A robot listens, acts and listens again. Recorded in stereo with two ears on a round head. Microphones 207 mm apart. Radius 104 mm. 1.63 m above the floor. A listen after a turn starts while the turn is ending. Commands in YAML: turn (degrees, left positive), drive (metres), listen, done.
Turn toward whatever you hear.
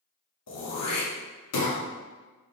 turn: 90
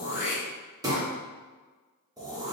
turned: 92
turn: -15
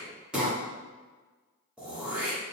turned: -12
done: "Found it: throat clearing, straight ahead."